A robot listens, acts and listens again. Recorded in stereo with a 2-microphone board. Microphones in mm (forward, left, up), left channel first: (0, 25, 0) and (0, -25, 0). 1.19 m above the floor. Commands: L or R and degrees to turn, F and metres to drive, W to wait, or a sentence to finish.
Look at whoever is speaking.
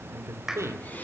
R70
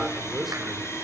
Found it: a man speaking, straight ahead.